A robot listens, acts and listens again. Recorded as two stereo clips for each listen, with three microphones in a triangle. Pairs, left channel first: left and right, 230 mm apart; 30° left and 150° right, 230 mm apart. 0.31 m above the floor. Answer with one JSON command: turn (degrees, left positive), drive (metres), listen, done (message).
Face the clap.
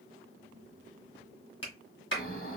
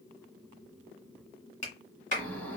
{"turn": 80}
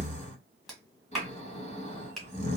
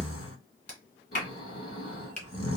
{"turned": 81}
{"done": "Facing the clap, 1 to 2 m away."}